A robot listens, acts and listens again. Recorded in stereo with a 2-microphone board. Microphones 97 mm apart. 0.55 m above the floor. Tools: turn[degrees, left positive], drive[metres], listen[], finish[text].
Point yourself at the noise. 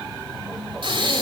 Thought: The breathing: about 55° right or 125° right.
Action: turn[-55]
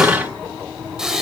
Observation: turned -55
Action: finish[Found it: breathing, straight ahead, 1 to 2 m away.]